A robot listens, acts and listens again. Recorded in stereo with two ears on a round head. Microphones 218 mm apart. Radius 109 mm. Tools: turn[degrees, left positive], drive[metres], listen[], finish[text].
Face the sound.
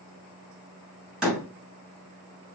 Action: turn[-30]
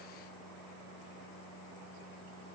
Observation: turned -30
Action: listen[]
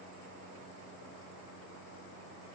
Action: finish[I heard a door slam, but can't make it out now. It was about 25° left or 145° right.]